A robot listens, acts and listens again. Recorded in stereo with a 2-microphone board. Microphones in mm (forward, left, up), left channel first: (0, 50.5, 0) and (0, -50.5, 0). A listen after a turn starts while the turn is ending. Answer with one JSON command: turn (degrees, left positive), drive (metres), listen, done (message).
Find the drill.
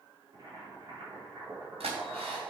{"turn": -90}
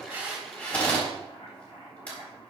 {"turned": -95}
{"turn": 15}
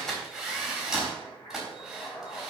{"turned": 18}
{"done": "Facing the drill."}